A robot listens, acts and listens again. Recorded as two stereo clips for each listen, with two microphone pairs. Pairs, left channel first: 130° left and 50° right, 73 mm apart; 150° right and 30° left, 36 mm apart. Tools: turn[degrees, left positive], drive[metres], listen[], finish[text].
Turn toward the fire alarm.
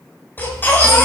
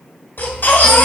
Action: listen[]
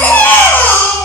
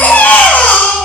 Action: listen[]
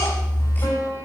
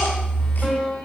Action: finish[I can't make out a fire alarm to turn to.]